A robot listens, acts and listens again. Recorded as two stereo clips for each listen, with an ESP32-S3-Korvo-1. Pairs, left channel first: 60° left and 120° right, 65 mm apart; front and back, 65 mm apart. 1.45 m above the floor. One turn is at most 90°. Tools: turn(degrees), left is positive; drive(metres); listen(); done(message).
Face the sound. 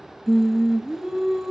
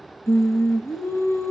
turn(degrees=-35)
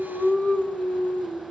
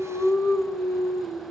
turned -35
done("Found it: singing, straight ahead.")